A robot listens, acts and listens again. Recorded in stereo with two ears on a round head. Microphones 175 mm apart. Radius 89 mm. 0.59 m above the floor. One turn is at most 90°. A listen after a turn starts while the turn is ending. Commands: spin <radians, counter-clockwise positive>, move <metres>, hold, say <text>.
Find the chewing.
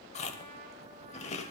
spin 0.52
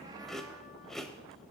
say Facing the chewing.